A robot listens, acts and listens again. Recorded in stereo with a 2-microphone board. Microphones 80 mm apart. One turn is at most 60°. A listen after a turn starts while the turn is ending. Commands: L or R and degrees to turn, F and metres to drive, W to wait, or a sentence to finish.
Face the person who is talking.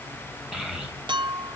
R30
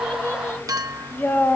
L30
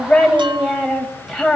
Found it: a child speaking, straight ahead, 2 to 4 m away.